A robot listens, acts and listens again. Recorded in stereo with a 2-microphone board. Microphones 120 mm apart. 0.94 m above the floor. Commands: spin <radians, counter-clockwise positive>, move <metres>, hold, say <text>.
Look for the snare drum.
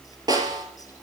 spin -0.61
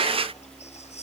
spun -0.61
hold
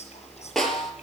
say Facing the snare drum.